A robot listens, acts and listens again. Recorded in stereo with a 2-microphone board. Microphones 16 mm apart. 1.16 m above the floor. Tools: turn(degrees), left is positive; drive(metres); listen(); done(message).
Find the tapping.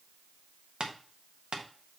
turn(degrees=-75)
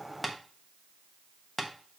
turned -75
done("Found it: tapping, straight ahead, 1 to 2 m away.")